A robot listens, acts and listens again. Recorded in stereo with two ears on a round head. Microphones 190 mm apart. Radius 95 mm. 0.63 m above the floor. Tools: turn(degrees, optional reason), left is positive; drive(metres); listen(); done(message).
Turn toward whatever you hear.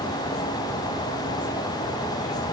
listen()
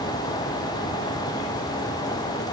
listen()
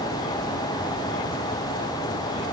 done("I can't make out anything to turn to.")